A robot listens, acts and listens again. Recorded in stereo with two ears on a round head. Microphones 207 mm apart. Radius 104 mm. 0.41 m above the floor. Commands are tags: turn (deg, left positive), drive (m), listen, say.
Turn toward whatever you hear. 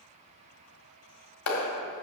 <turn deg="65"/>
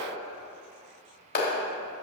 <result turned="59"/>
<turn deg="45"/>
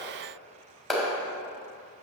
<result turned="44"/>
<say>Found it: a clap, straight ahead.</say>